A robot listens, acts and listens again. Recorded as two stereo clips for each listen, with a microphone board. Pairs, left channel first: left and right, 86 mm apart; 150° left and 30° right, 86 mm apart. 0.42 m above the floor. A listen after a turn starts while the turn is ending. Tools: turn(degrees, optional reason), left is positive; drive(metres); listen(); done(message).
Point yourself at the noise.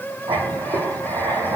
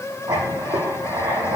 turn(degrees=-65, reason="The writing: 65° right.")
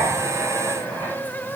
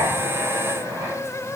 turn(degrees=20, reason="The writing is now 20° left.")
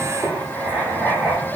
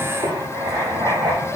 done("Facing the writing, over 4 m away.")